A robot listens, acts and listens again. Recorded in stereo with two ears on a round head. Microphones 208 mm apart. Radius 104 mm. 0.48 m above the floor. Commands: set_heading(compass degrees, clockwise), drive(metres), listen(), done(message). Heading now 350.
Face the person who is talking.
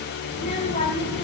set_heading(330)
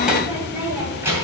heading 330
set_heading(340)
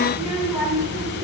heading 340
set_heading(350)
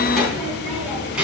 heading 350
done("Found it: a child speaking, straight ahead, 2 to 4 m away.")